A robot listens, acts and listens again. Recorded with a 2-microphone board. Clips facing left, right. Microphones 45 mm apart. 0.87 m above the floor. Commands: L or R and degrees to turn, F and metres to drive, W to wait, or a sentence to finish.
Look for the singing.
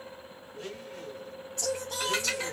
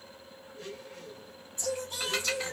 L65
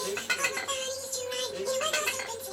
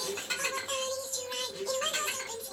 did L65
L70
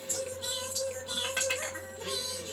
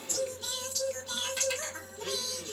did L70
L15
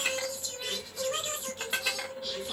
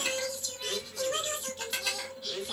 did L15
Found it: singing, straight ahead.